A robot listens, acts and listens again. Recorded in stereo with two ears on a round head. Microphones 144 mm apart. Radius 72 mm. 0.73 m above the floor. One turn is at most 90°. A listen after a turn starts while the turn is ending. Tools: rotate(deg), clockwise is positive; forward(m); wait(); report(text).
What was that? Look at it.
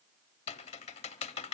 rotate(-40)
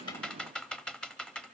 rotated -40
report("Facing the typing on a keyboard, under 1 m away.")